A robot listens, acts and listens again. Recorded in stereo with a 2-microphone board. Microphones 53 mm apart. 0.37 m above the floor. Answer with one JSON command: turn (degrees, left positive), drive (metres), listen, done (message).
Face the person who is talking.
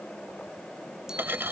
{"listen": true}
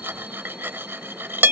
{"listen": true}
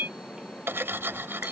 {"done": "I can't make out anyone speaking, only cutlery clinking."}